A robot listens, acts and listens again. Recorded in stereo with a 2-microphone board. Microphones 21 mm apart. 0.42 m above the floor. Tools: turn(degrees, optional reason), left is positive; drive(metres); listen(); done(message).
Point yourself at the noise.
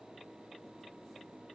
listen()
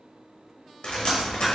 turn(degrees=60, reason="The dripping: about 60° left or 120° left.")
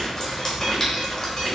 turn(degrees=35, reason="So it is at 35° left.")
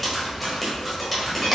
done("Found it: dripping, straight ahead, 1 to 2 m away.")